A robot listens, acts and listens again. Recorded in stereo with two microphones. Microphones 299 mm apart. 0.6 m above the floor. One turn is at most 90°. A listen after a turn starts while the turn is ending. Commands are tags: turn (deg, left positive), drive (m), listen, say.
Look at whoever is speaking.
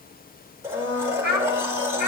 <turn deg="70"/>
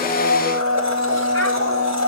<listen/>
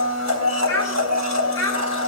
<turn deg="10"/>
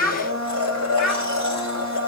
<say>Facing the child speaking.</say>